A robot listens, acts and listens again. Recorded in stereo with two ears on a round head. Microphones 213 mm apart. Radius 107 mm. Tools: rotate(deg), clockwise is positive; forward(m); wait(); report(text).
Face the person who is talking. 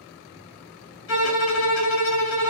wait()
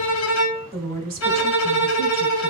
rotate(40)
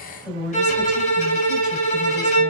report("Found it: a woman speaking, straight ahead, 2 to 4 m away.")